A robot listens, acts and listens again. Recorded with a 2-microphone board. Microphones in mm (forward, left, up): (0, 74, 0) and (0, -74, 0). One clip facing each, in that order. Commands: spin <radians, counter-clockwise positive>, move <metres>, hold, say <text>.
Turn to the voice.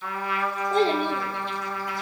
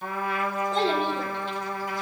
spin 0.96
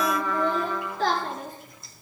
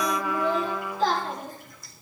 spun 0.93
spin 1.22
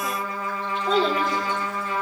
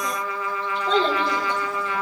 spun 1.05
spin 0.17
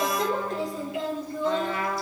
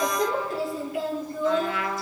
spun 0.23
say Facing the child speaking, over 4 m away.